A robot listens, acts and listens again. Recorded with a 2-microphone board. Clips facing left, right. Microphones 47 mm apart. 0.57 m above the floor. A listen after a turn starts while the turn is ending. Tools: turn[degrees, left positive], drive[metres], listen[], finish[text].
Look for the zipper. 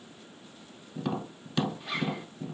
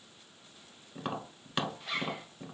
Action: turn[30]
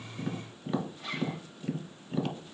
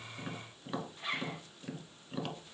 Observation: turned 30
Thought: So it is at 25° right.
Action: turn[-25]
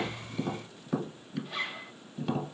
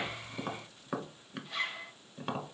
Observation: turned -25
Action: finish[Found it: a zipper, straight ahead, under 1 m away.]